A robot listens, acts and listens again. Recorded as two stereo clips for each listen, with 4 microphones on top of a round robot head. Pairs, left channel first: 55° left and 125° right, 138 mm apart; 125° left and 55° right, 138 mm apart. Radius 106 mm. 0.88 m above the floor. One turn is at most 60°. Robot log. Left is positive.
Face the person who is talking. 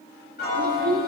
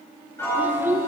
note: The child speaking: 125° right.
cmd yaw -60
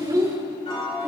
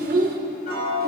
note: The child speaking is now 60° right.
cmd yaw -60
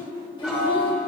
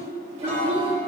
end: Found it: a child speaking, straight ahead, 2 to 4 m away.